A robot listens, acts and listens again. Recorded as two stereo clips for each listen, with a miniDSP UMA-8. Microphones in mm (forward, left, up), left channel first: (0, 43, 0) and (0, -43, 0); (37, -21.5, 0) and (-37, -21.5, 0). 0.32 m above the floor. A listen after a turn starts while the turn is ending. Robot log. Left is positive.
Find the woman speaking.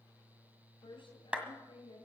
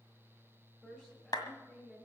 note: The woman speaking: 75° left.
cmd yaw +75
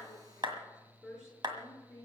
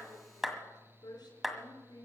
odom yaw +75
note: The woman speaking is now 10° right.
cmd yaw -10
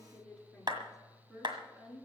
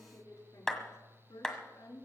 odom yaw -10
end: Found it: a woman speaking, straight ahead, over 4 m away.